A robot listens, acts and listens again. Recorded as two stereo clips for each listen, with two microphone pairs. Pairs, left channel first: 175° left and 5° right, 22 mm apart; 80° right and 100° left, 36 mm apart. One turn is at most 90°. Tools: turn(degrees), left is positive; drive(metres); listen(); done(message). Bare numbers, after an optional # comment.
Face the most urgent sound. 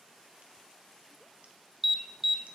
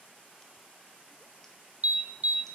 # The alarm: 65° left.
turn(65)
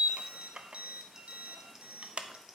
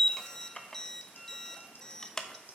# The alarm is now 10° right.
turn(-10)
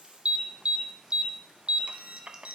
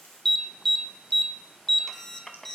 done("Found it: an alarm, straight ahead.")